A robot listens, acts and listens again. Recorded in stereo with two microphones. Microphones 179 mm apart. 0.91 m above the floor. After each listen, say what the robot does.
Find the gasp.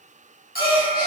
Turn 30° right.
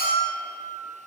Keep listening.
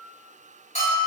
I heard a gasp, but can't make it out now. It was about straight ahead or 120° right.